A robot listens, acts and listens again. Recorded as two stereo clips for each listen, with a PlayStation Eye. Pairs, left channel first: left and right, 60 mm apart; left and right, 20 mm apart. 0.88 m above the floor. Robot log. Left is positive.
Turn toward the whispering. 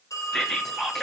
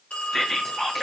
cmd yaw +30
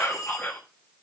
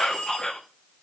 note: So it is at 145° left.
cmd yaw +145
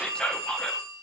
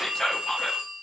note: The whispering is now 15° left.
cmd yaw +15
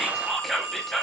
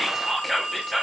end: Found it: whispering, straight ahead.